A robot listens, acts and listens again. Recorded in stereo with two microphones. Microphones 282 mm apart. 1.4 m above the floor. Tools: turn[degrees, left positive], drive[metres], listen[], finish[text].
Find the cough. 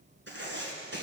Action: listen[]
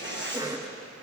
Action: turn[-30]
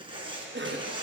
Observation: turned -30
Thought: So it is at 140° right.
Action: turn[-140]
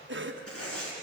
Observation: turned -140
Thought: The cough is now 45° right.
Action: turn[-45]
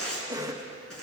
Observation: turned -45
Thought: The cough is now 15° right.
Action: turn[-15]
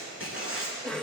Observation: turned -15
Action: finish[Found it: a cough, straight ahead, 1 to 2 m away.]